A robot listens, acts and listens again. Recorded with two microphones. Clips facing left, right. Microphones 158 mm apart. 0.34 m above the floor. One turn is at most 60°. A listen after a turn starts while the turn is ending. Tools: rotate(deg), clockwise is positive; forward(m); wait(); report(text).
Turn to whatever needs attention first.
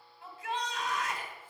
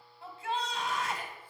rotate(30)
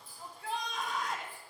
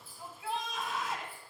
report("Found it: a shout, straight ahead, 1 to 2 m away.")